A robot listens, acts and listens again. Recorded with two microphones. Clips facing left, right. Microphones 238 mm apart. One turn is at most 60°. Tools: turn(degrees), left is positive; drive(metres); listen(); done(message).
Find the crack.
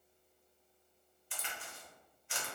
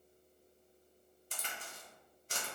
turn(degrees=-45)
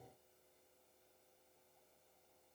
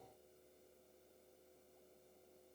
listen()
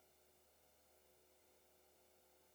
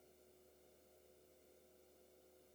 done("I heard a crack, but can't make it out now. It was about straight ahead or 90° right.")